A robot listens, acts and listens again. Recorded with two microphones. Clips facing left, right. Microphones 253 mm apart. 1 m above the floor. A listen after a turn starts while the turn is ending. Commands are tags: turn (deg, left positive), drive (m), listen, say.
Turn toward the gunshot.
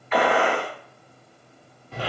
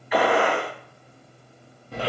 <turn deg="-30"/>
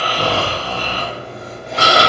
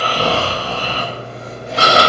<listen/>
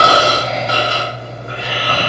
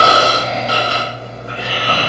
<say>I heard a gunshot, but can't make it out now. It was about 20° left or 140° right.</say>